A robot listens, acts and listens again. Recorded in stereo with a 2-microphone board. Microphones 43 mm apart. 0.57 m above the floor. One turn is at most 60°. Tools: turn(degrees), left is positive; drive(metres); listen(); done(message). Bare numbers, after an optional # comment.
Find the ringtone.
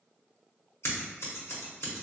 listen()
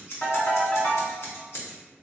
# The ringtone: about 35° left or 145° left.
turn(35)
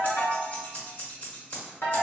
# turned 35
# So it is at 105° left.
turn(60)
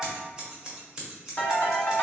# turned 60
# The ringtone is now 50° left.
turn(50)
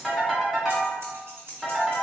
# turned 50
done("Found it: a ringtone, straight ahead, 1 to 2 m away.")